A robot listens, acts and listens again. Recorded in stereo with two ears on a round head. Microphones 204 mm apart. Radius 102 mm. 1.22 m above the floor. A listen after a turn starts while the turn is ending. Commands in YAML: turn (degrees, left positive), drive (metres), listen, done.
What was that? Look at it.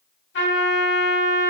turn: 50
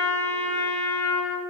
turn: 10
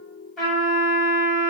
done: "Found it: a trumpet, straight ahead, 1 to 2 m away."